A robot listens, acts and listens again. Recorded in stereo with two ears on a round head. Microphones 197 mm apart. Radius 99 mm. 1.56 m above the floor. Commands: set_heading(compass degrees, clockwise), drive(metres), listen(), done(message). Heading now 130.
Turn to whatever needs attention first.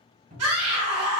set_heading(220)
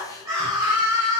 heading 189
set_heading(204)
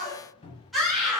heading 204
done("Facing the scream.")